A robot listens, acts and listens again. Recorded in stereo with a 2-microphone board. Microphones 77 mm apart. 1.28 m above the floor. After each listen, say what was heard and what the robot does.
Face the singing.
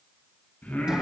The singing: about 20° left or 160° left. Turn 20° left.
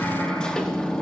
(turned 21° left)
Keep listening.
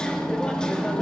Keep listening.
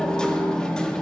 I heard singing, but can't make it out now. It was about straight ahead or 140° left.